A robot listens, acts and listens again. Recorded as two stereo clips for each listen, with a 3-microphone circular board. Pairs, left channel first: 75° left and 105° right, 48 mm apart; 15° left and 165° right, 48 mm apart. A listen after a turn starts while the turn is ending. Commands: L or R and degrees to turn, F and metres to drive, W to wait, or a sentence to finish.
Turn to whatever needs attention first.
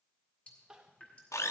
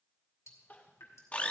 R35
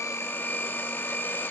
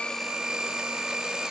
W
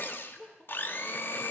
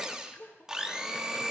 Facing the crying.